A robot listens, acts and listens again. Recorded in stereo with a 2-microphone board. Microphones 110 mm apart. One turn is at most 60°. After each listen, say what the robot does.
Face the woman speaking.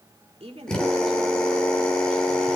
Turn 60° right.
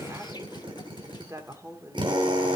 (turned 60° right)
Turn 30° right.
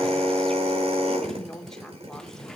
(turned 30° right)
Found it: a woman speaking, straight ahead, 2 to 4 m away.